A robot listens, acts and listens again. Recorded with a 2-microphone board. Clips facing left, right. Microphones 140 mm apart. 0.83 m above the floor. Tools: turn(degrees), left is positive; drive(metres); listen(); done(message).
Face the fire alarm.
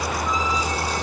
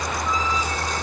listen()
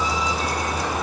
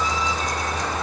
listen()
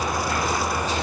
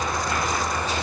done("I can't make out a fire alarm.")